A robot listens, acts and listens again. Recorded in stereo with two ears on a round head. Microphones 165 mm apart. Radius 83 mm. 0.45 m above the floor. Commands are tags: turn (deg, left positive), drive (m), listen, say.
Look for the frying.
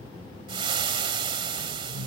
<turn deg="-30"/>
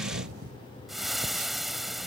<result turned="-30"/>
<say>Found it: frying, straight ahead.</say>